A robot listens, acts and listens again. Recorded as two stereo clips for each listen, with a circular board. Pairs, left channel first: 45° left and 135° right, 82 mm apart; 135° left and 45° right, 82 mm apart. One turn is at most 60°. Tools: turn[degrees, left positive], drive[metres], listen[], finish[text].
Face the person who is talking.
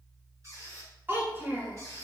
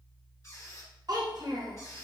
Thought: The child speaking: 75° right.
Action: turn[-60]
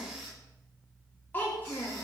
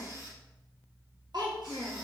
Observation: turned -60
Thought: The child speaking is now 20° right.
Action: turn[-20]
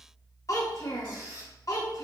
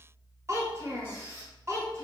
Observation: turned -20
Action: finish[Facing the child speaking.]